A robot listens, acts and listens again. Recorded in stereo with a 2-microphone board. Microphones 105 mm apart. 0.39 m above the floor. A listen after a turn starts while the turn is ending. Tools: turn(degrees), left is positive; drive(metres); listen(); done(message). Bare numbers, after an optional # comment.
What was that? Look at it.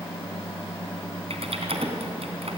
# The typing on a keyboard: about 70° right or 110° right.
turn(-70)
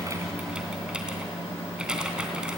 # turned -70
# So it is at 10° right.
turn(-10)
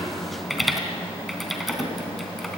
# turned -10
done("Found it: typing on a keyboard, straight ahead.")